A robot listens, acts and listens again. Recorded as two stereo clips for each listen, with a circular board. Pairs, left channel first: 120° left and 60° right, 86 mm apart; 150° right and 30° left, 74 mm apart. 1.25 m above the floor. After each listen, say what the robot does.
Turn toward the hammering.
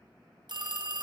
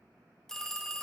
Keep listening.
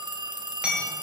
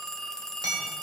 Turn 15° left.
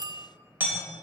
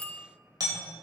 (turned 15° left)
Found it: hammering, straight ahead.